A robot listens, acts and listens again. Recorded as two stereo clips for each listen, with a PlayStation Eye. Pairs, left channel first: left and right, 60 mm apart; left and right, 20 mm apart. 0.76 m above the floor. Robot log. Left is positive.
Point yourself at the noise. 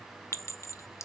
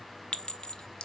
note: The clink: about 55° left or 125° left.
cmd yaw +55
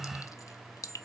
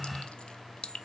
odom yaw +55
note: So it is at 70° left.
cmd yaw +70
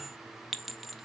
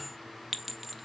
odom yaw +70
end: Found it: a clink, straight ahead.